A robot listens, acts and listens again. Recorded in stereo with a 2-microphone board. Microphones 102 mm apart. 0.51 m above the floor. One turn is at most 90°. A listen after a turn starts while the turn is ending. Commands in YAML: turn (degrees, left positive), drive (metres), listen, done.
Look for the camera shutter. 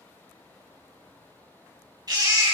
listen: true
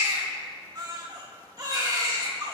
listen: true
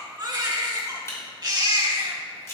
turn: 30
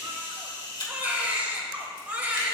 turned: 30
turn: 90
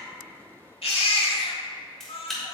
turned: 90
done: "Facing the camera shutter, 2 to 4 m away."